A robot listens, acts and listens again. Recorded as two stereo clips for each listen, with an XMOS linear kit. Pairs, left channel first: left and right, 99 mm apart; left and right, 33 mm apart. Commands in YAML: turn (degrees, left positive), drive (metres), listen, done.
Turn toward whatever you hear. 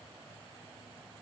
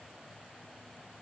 listen: true
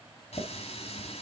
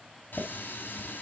turn: 90
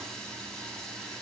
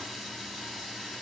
done: "Facing the running tap."